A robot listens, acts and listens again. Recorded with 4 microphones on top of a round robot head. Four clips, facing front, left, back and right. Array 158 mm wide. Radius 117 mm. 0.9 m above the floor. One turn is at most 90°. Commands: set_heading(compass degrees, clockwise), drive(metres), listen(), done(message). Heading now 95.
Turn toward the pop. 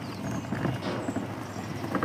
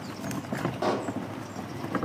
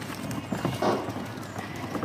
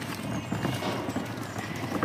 set_heading(5)
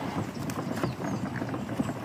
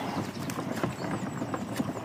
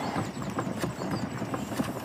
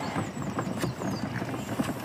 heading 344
set_heading(304)
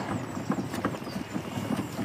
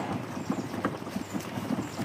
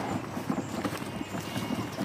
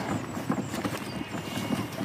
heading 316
set_heading(306)
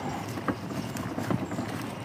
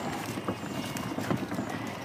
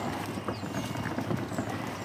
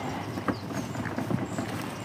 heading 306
done("Facing where the pop came from. I can't hear it now.")